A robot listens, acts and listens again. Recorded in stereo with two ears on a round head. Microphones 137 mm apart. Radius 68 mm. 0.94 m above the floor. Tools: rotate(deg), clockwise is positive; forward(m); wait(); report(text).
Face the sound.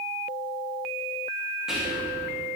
rotate(30)
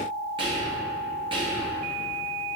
rotate(145)
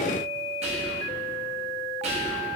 rotate(45)
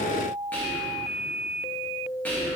rotate(-10)
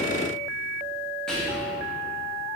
report("Found it: whispering, straight ahead.")